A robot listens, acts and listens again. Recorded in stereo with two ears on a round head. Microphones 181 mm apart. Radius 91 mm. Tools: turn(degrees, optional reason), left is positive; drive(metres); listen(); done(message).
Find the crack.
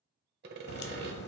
turn(degrees=55, reason="The crack: about 55° left or 125° left.")
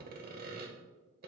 listen()
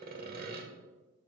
done("I heard a crack, but can't make it out now. It was about straight ahead or 70° left.")